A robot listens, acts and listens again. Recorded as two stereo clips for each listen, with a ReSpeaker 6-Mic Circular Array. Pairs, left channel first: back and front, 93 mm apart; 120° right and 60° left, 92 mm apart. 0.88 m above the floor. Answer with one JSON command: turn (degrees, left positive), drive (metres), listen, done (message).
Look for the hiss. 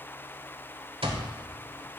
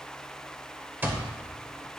{"listen": true}
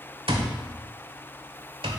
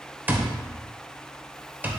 {"listen": true}
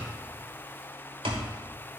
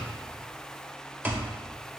{"done": "I can't make out a hiss, only an alarm clock."}